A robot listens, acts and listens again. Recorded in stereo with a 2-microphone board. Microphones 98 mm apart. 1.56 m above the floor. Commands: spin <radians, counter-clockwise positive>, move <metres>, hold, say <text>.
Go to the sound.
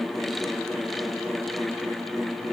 hold
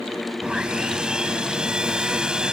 spin -0.52
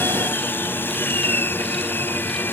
spin 0.35
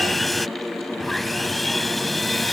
move 1.0
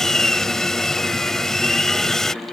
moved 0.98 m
move 1.0
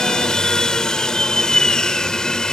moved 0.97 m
spin 0.17
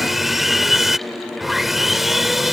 move 1.0
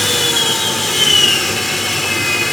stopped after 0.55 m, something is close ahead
say Arrived at the sawing, straight ahead.